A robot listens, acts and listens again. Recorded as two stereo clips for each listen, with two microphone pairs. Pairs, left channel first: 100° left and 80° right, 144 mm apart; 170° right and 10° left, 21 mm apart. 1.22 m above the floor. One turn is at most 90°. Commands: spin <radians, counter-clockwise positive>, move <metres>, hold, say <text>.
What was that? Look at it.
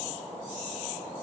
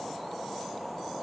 hold
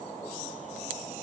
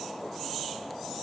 hold
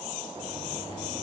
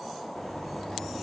spin -1.57
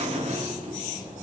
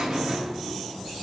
spin -0.70
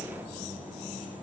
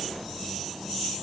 say Facing the buzzer, 1 to 2 m away.